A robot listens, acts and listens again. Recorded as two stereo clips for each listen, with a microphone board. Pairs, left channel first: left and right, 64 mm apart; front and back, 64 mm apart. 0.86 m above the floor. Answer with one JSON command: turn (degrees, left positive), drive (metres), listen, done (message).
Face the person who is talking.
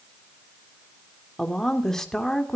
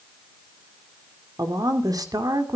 {"turn": 175}
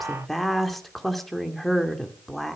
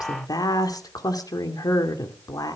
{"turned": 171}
{"done": "Found it: a woman speaking, straight ahead."}